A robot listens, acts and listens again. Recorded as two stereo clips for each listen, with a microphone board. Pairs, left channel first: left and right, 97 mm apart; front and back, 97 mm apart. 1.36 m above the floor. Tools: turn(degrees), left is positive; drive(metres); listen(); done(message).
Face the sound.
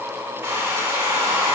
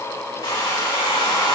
turn(degrees=-30)
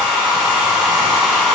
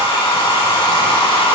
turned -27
done("Facing the hair dryer.")